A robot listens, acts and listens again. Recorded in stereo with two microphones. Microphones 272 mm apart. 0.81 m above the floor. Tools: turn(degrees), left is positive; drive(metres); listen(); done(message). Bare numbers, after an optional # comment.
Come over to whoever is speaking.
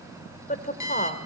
# The woman speaking: about 30° left or 150° left.
turn(30)
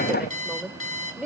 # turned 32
drive(1.0)
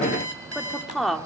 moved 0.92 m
drive(1.0)
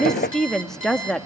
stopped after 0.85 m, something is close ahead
done("I am next to the woman speaking.")